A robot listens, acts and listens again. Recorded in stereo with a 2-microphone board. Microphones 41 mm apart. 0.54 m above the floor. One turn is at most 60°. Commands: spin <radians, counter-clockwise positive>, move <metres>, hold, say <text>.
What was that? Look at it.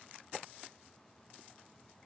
hold
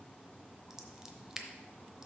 spin -0.52
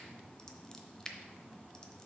spin 0.26
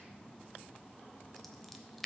say Found it: scissors, straight ahead.